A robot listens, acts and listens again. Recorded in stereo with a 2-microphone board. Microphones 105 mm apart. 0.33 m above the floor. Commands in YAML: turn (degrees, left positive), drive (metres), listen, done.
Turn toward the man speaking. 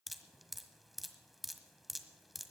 listen: true
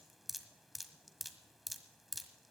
listen: true
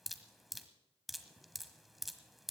done: "I can't make out a man speaking to turn to."